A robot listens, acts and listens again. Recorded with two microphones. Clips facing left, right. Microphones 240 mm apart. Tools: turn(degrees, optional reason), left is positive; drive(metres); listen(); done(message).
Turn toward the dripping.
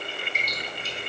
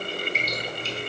turn(degrees=30)
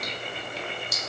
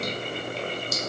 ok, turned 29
turn(degrees=150, reason="So it is at 150° left.")
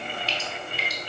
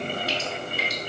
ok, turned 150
done("Facing the dripping.")